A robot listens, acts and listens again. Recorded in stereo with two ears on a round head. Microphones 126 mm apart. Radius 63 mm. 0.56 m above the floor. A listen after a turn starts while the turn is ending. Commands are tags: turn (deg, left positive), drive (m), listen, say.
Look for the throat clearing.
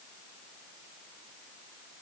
<listen/>
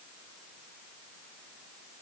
<listen/>
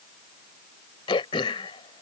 <turn deg="35"/>
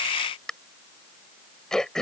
<say>Facing the throat clearing.</say>